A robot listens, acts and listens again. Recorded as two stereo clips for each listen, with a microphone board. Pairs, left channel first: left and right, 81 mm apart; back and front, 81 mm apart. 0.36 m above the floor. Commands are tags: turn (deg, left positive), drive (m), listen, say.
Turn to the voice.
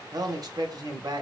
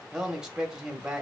<turn deg="-80"/>
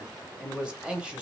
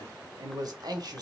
<turn deg="-15"/>
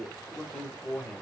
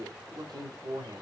<say>Facing the man speaking.</say>